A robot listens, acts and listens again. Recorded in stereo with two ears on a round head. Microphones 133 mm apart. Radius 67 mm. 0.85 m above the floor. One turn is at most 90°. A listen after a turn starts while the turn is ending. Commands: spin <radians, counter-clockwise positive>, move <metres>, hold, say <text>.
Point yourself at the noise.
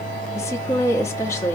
spin 0.35
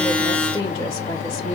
spin 1.57
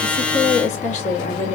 spin 0.96
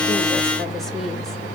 hold
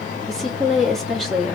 say Found it: a woman speaking, straight ahead.